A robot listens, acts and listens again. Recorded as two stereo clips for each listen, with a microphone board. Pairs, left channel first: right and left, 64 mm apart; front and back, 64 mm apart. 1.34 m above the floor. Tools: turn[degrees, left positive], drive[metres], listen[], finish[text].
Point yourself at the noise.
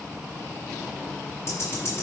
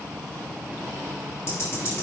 Thought: The ticking: 45° right.
Action: turn[-45]
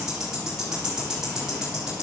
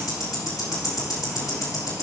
Thought: The ticking is now 10° left.
Action: turn[10]
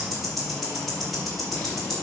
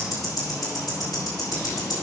Action: finish[Facing the ticking.]